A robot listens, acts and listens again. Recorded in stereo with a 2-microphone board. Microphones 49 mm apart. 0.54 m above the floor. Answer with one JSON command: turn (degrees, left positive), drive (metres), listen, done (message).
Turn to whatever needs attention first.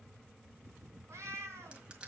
{"listen": true}
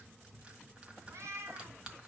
{"listen": true}
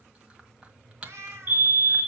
{"turn": -45}
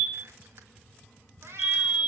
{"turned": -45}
{"done": "Facing the fire alarm, over 4 m away."}